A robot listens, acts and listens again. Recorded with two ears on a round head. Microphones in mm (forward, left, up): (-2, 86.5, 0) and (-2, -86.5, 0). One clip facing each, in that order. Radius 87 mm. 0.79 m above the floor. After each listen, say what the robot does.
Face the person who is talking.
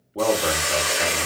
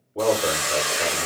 Turn 45° left.
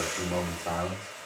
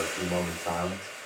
Turn 10° left.
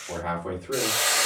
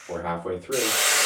Facing the man speaking.